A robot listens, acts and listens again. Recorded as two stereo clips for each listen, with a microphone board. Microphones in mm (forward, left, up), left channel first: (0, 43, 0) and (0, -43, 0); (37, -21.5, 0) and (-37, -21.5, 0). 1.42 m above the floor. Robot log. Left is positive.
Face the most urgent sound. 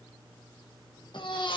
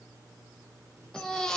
note: The baby crying: 80° left.
cmd yaw +80
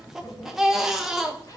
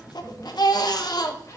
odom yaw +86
end: Found it: a baby crying, straight ahead, under 1 m away.